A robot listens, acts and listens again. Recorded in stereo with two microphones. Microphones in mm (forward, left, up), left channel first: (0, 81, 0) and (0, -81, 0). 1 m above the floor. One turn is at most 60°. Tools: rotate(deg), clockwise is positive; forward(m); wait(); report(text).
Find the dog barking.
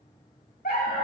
rotate(-60)
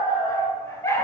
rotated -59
rotate(-15)
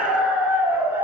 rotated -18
rotate(15)
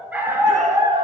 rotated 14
rotate(30)
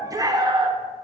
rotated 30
rotate(35)
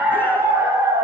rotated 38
rotate(20)
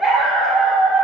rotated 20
report("Facing the dog barking, 1 to 2 m away.")